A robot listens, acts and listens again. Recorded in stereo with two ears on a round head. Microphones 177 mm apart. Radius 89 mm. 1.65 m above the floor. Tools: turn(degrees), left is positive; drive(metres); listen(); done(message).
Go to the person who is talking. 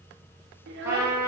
turn(degrees=-60)
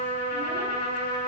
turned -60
listen()
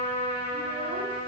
listen()
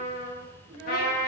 turn(degrees=-55)
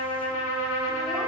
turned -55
listen()
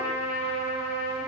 listen()
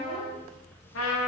done("I heard a child speaking from this way, but can't make it out now. I did not reach it.")